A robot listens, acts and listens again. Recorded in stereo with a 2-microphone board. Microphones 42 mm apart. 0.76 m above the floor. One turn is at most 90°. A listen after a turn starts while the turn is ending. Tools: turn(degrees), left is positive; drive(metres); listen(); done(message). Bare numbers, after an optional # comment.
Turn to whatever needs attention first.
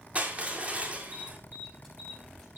# The alarm: about 55° right or 125° right.
turn(-55)
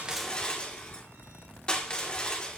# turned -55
listen()
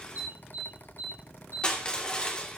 # So it is at 70° right.
turn(-70)
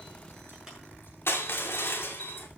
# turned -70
# The alarm is now 10° right.
turn(-10)
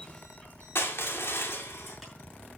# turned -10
listen()
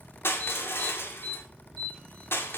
done("Facing the alarm.")